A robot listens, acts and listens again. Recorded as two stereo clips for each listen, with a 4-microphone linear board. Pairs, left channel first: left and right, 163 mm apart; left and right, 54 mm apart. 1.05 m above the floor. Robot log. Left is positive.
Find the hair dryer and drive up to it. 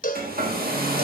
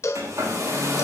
cmd yaw -90
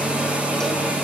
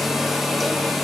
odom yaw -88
note: So it is at 10° right.
cmd yaw -10
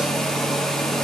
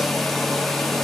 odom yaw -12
cmd fwd 1.0
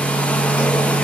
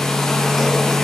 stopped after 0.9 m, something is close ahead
note: The hair dryer is now 10° left.
cmd yaw +10
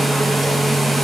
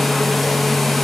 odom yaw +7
end: I am next to the hair dryer.